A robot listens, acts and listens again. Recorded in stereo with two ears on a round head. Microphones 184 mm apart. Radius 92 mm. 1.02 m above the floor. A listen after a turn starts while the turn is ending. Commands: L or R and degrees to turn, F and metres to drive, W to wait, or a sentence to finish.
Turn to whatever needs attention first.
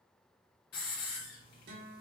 W
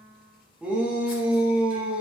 R30
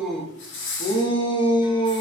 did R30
L25
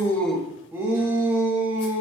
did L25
R10
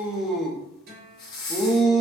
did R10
Facing the shout.